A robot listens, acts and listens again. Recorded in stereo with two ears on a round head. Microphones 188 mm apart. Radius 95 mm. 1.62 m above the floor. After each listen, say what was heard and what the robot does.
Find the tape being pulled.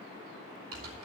Keep listening.
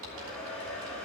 Keep listening.
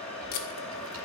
The tape being pulled: about 50° left or 130° left. Turn 50° left.
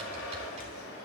Keep listening.
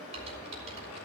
Keep listening.
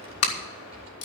So it is at 80° left. Turn 80° left.
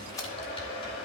The tape being pulled is now 15° left. Turn 15° left.
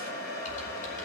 Keep listening.
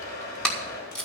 Facing the tape being pulled.